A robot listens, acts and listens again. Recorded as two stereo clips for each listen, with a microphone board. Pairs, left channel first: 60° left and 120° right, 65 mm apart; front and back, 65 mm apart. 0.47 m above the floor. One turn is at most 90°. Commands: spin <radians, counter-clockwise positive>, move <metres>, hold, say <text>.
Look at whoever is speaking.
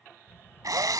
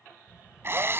spin 1.57
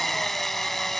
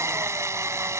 spin 0.35
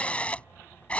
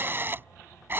spin 0.17
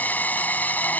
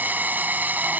hold
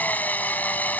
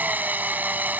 hold
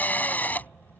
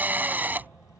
say Found it: a child speaking, straight ahead.